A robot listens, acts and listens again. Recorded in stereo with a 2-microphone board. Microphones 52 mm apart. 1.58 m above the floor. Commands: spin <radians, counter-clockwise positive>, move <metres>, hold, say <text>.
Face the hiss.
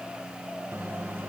hold
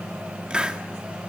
spin -0.35
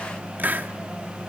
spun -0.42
spin -2.36
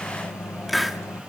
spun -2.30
say Found it: a hiss, straight ahead.